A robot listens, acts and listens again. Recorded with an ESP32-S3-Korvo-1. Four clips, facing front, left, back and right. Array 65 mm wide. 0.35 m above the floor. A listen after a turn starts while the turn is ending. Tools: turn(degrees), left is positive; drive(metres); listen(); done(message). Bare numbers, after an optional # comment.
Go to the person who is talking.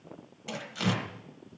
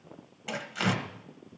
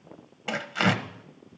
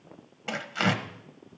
listen()
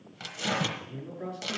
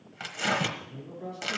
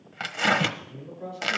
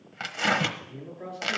# The man speaking: 35° right.
turn(-35)
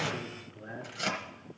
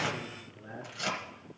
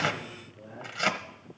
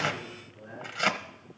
drive(1.0)
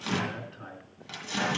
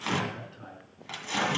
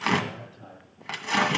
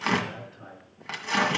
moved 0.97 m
drive(1.0)
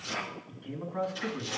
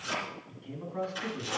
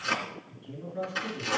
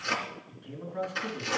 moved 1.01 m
# The man speaking is now 10° left.
turn(10)
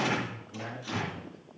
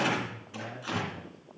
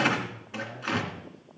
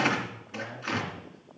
drive(1.0)
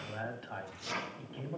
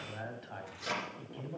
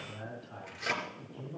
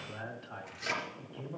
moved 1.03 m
drive(1.0)
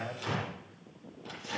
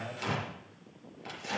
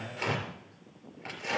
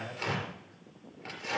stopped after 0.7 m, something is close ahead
done("I am next to the man speaking.")